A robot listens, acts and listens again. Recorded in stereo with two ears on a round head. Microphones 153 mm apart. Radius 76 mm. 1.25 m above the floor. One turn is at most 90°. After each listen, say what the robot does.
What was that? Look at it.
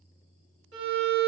Turn 70° right.
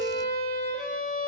Turn 25° right.
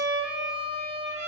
Found it: a violin, straight ahead, 1 to 2 m away.